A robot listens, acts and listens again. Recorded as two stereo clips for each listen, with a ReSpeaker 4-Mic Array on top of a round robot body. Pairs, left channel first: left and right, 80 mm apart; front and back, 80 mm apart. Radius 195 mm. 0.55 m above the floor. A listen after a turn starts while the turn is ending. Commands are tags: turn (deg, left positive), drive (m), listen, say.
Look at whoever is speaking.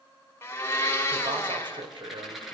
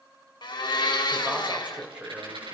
<turn deg="-105"/>
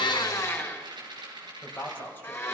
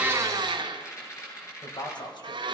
<turn deg="25"/>
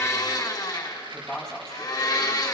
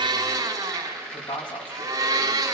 <turn deg="10"/>
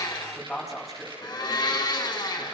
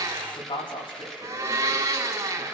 <say>Facing the man speaking, over 4 m away.</say>